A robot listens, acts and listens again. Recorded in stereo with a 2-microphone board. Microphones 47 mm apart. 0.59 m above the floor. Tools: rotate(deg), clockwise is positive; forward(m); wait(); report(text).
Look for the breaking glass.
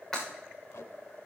rotate(-30)
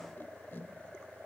wait()
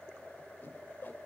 report("I heard breaking glass, but can't make it out now. It was about 20° right or 140° left.")